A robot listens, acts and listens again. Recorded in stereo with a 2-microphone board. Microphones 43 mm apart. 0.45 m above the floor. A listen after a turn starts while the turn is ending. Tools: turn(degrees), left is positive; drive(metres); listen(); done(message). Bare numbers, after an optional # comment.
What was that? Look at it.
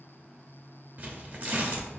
# The tearing paper: about 45° right or 135° right.
turn(-45)
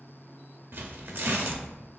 # So it is at 80° right.
turn(-80)
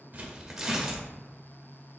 # The tearing paper is now 10° right.
turn(-10)
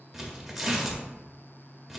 done("Found it: tearing paper, straight ahead, under 1 m away.")